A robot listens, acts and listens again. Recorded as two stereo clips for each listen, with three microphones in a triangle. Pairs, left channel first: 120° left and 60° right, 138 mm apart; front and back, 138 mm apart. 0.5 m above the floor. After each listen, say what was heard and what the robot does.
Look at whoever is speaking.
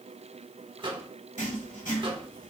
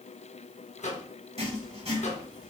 Keep listening.
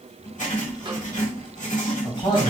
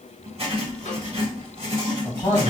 The man speaking: 70° left. Turn 70° left.
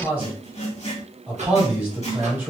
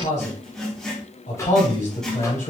The man speaking is now 15° left. Turn 15° left.
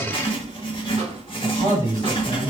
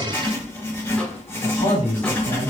Facing the man speaking, 2 to 4 m away.